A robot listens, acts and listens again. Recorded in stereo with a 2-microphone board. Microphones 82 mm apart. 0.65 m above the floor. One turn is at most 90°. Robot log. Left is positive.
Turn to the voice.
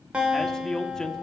cmd yaw +30
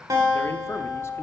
cmd idle
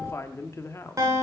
note: So it is at 140° left.
cmd yaw +90
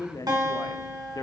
note: The man speaking is now 60° left.
cmd yaw +60
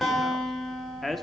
end: Facing the man speaking, under 1 m away.